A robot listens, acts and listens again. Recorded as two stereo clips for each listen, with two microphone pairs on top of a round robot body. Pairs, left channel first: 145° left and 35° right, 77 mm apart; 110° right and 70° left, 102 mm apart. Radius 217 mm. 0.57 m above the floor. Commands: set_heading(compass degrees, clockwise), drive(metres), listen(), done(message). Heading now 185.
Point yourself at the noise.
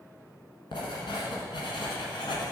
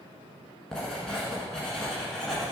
set_heading(20)
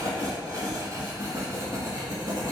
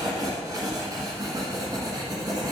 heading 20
set_heading(5)
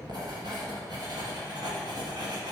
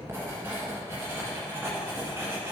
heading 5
done("Facing the writing, 1 to 2 m away.")